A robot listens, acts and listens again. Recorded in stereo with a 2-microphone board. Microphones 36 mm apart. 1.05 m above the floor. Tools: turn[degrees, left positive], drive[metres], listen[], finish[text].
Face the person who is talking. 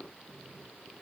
Action: listen[]
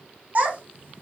Thought: The child speaking: about 50° right or 130° right.
Action: turn[-50]
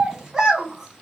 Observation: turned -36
Thought: So it is at 15° right.
Action: turn[-15]
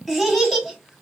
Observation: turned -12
Action: finish[Found it: a child speaking, straight ahead, 1 to 2 m away.]